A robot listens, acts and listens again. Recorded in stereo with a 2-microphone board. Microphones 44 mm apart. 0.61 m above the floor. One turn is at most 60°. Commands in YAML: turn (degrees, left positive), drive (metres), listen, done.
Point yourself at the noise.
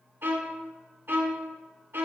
turn: -60
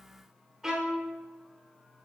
turn: -15
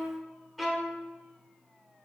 done: "Facing the violin, 1 to 2 m away."